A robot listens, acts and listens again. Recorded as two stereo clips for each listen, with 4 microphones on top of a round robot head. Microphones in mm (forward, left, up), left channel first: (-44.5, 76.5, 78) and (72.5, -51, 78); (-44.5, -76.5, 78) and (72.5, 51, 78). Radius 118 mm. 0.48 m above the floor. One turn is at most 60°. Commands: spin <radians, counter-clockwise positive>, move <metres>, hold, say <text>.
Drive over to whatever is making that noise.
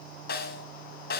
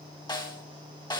spin 1.05
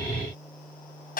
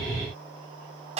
spin 1.05
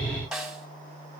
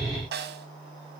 spin 0.70
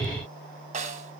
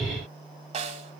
move 1.0
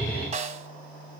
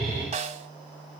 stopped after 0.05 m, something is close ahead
say Blocked. The snare drum is further on, straight ahead.